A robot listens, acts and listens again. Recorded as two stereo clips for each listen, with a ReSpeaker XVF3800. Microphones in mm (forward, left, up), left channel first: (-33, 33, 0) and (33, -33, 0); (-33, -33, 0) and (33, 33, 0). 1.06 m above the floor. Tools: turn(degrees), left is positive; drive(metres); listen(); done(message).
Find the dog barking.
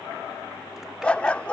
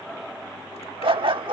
turn(degrees=60)
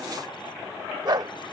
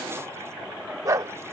done("Found it: a dog barking, straight ahead.")